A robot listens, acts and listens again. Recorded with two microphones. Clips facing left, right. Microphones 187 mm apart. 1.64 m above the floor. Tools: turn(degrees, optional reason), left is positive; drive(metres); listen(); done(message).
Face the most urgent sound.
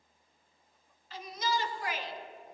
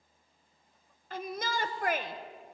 turn(degrees=-55, reason="The shout: about 55° right or 125° right.")
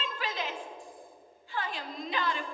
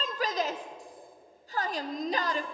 turn(degrees=-50, reason="So it is at 50° right.")
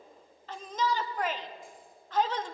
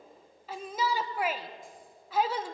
turn(degrees=-10, reason="The shout is now 10° right.")
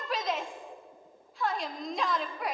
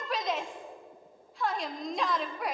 done("Facing the shout.")